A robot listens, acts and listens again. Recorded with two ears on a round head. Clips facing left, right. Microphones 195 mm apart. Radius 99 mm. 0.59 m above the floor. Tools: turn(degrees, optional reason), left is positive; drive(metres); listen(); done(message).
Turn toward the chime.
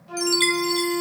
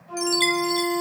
turn(degrees=30)
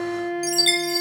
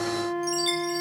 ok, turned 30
turn(degrees=150, reason="So it is at 150° left.")
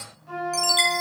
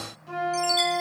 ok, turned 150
turn(degrees=25, reason="The chime is now 25° left.")
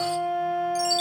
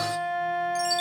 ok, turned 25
done("Facing the chime.")